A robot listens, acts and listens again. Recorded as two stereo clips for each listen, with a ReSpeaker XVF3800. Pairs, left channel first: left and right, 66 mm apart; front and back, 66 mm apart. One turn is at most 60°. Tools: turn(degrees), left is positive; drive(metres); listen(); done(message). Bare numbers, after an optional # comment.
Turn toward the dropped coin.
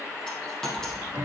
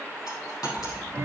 # The dropped coin: 10° left.
turn(10)
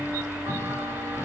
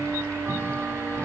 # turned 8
done("I heard a dropped coin from this way, but can't make it out now.")